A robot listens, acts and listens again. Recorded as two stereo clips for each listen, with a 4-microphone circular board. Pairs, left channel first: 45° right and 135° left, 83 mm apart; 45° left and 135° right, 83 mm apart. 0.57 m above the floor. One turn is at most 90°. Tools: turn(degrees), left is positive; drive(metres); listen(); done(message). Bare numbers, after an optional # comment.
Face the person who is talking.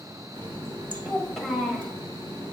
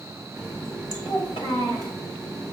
# The child speaking: 45° left.
turn(45)
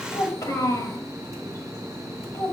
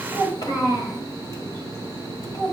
# The child speaking is now 10° left.
turn(10)
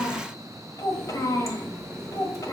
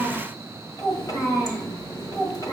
done("Found it: a child speaking, straight ahead.")